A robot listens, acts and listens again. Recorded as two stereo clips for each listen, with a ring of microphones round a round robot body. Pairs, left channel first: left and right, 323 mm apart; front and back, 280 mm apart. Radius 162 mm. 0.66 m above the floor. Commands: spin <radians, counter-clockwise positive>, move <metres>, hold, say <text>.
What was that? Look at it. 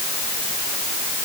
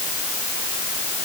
hold
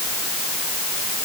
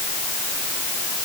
hold
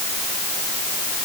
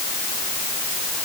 say I can't make out anything to turn to.